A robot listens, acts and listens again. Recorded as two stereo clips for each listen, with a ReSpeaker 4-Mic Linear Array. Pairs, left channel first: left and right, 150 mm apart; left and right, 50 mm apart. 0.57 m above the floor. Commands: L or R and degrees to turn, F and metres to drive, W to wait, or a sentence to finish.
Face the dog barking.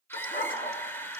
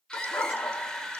L90
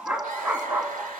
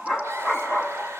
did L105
R10
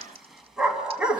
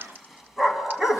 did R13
Found it: a dog barking, straight ahead.